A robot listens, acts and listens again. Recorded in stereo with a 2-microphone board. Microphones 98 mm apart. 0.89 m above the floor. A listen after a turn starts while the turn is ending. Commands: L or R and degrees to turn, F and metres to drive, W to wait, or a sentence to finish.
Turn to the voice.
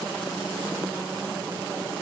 W
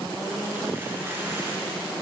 W
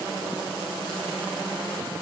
I can't make out anyone speaking.